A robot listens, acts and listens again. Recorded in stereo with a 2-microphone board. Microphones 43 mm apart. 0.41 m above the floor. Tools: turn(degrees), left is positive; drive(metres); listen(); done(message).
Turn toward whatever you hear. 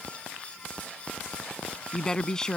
turn(degrees=30)
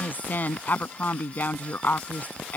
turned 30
turn(degrees=135)
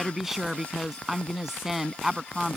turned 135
done("Facing the woman speaking.")